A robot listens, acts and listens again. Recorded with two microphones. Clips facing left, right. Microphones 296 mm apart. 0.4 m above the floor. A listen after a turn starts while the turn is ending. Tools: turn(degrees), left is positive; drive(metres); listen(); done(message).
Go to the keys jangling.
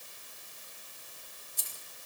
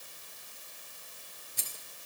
turn(degrees=-90)
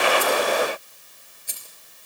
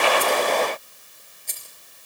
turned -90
turn(degrees=10)
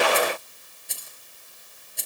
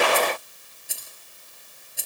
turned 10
drive(metres=1.0)
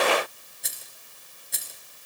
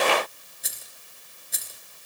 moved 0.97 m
drive(metres=1.0)
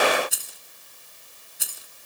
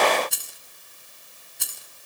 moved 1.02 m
drive(metres=1.0)
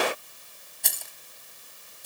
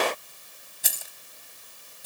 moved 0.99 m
drive(metres=1.0)
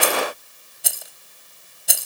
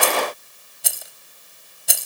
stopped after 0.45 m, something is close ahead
done("I am next to the keys jangling.")